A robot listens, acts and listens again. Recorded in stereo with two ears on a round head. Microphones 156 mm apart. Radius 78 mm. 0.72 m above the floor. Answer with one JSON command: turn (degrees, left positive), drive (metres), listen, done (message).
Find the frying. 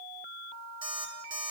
{"listen": true}
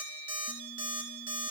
{"listen": true}
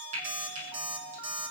{"turn": -45}
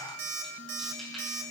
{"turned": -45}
{"listen": true}
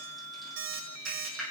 {"done": "Facing the frying."}